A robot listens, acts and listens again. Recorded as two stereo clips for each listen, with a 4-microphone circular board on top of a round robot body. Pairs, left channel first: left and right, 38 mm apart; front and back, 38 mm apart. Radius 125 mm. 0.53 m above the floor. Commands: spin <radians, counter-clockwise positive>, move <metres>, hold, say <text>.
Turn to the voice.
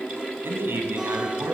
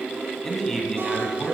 spin -1.48
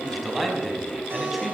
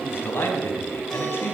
say Found it: a man speaking, straight ahead.